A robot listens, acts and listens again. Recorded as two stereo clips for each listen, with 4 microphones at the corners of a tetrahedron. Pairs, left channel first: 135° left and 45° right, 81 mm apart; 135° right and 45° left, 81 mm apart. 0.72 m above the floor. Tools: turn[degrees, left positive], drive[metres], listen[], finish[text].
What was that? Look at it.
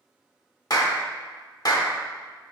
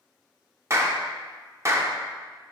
Thought: The clap: 100° left.
Action: turn[100]
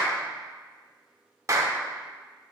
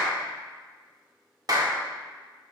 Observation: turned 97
Action: finish[Found it: a clap, straight ahead.]